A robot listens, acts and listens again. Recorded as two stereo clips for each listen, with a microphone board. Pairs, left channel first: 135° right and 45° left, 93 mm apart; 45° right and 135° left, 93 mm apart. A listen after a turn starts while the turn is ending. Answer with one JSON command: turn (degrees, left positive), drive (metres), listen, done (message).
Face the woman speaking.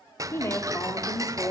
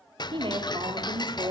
{"turn": 165}
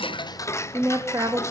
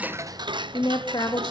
{"done": "Facing the woman speaking."}